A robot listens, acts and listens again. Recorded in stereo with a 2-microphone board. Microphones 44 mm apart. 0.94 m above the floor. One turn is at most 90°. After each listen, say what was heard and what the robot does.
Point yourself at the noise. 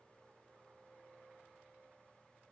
Keep listening.
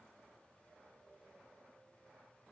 Keep listening.
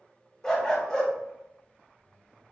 Turn 30° left.
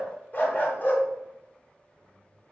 So it is at 135° left. Turn 90° left.
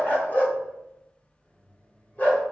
The dog barking is now 40° left. Turn 40° left.
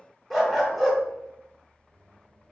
Found it: a dog barking, straight ahead, 1 to 2 m away.